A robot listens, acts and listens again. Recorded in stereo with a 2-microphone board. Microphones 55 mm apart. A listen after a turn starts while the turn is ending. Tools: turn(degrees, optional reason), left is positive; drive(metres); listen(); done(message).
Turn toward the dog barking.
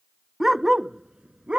turn(degrees=-20, reason="The dog barking: about 20° right or 160° right.")
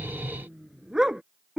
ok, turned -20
turn(degrees=-15, reason="The dog barking: about 15° right or 165° right.")
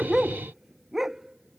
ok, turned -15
turn(degrees=-30)
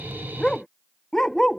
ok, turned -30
done("Found it: a dog barking, straight ahead.")